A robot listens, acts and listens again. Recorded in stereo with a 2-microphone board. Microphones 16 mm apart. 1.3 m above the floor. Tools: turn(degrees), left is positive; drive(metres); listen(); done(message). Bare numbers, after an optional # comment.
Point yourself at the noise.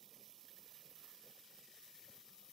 listen()
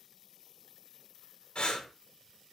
# The breathing: about 70° left or 110° left.
turn(70)
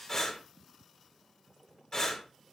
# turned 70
# So it is at 40° left.
turn(40)
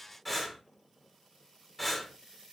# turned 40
# The breathing is now 10° left.
turn(10)
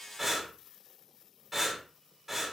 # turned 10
done("Found it: breathing, straight ahead, 1 to 2 m away.")